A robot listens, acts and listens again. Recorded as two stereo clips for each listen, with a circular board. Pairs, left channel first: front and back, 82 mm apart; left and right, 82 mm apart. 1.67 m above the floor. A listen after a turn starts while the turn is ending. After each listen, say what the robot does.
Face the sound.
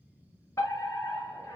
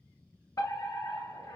Turn 50° left.
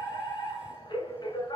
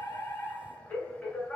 Turn 20° left.
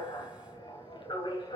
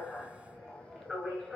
Facing the fire alarm.